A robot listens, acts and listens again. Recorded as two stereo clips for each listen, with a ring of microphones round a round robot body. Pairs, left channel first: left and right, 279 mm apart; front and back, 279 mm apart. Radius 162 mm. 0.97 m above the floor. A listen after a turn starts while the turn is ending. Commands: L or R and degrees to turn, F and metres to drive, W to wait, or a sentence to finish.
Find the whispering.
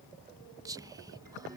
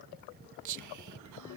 R170
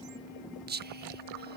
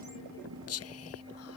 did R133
R35
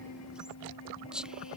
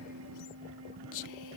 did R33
Found it: whispering, straight ahead.